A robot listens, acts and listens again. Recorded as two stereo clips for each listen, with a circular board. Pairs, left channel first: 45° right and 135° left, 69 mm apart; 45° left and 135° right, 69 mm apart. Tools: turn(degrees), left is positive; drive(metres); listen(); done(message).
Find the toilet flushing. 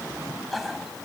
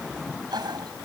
turn(degrees=-135)
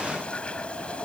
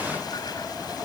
listen()
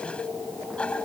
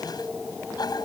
turn(degrees=30)
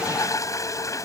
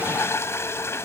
done("Found it: a toilet flushing, straight ahead.")